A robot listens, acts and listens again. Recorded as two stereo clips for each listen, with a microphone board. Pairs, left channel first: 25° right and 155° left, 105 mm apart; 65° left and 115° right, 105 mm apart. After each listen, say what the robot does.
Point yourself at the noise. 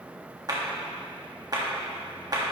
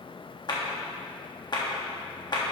Turn 110° left.
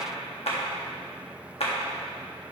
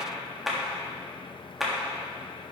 Turn 25° right.
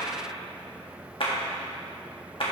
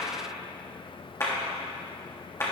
Found it: a clap, straight ahead, 1 to 2 m away.